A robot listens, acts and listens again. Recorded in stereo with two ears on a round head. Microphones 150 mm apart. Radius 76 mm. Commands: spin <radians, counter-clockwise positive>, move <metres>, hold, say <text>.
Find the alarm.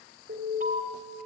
spin -1.05
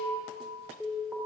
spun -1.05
say Found it: an alarm, straight ahead, 2 to 4 m away.